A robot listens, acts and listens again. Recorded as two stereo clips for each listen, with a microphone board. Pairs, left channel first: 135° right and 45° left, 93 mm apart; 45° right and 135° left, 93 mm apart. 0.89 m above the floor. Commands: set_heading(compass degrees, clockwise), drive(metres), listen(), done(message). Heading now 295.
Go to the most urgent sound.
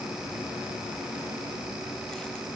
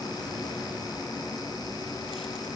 listen()
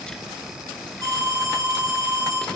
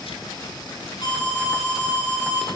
drive(1.0)
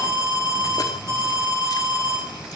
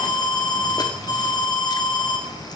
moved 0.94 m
set_heading(305)
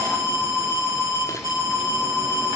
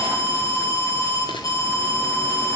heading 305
drive(1.0)
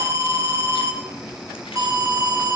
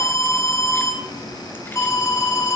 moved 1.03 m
drive(1.0)
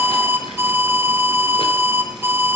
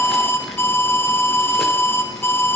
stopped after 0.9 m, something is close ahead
done("Arrived at the alarm, straight ahead.")